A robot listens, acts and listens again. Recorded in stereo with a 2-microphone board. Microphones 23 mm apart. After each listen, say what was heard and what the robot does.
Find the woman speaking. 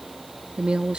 The woman speaking: about 60° right or 120° right. Turn 60° right.
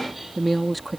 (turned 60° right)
Facing the woman speaking.